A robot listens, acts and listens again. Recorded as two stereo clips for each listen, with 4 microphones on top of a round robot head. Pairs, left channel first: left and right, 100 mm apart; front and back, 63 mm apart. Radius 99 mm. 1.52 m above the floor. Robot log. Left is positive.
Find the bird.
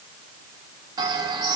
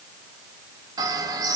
note: The bird: 150° right.
cmd yaw -150
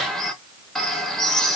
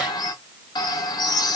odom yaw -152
end: Facing the bird.